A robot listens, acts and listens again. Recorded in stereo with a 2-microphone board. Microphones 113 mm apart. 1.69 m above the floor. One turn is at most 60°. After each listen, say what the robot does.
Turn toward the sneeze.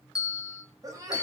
Turn 30° right.
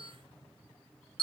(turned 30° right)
Keep listening.
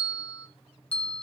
I heard a sneeze, but can't make it out now. It was about straight ahead or 120° right.